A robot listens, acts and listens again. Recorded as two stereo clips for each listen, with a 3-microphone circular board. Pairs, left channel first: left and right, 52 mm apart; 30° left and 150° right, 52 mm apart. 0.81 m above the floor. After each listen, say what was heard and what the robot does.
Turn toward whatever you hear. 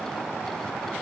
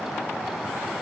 Keep listening.
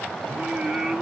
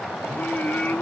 The singing: 20° right. Turn 20° right.
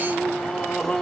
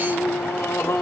The singing is now 10° left. Turn 10° left.
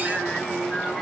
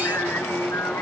The singing is now 10° left. Turn 10° left.
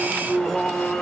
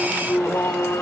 The singing is now 15° left. Turn 15° left.
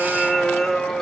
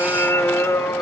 The singing is now 10° left. Turn 10° left.
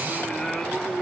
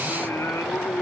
Found it: singing, straight ahead, 2 to 4 m away.